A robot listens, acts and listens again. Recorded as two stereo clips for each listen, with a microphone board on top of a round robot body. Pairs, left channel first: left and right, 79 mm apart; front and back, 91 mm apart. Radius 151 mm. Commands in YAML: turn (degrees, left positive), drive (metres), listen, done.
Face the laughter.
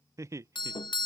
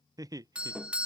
turn: -135
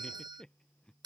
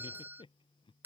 turn: 10
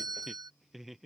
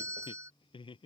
done: "Facing the laughter."